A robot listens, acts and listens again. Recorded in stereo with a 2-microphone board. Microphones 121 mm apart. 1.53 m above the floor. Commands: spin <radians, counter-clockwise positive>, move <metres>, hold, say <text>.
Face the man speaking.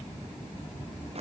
hold
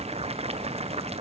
hold
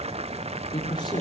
spin 0.61
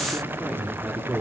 spin -0.17
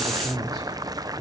say Found it: a man speaking, straight ahead, over 4 m away.